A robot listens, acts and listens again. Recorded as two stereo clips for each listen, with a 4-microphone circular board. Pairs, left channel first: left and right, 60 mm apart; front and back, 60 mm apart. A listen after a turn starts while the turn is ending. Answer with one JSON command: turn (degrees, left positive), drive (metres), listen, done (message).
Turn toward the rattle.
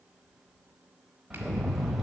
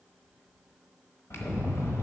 {"done": "Found it: a rattle, straight ahead."}